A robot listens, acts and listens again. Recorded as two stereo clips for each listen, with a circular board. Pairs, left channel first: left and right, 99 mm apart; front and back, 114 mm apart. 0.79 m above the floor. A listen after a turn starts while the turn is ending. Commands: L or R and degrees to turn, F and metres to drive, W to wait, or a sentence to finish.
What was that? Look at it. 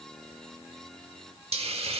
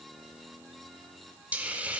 R100
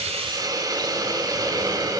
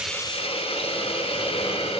R40
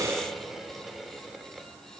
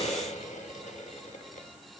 Facing the hiss, 1 to 2 m away.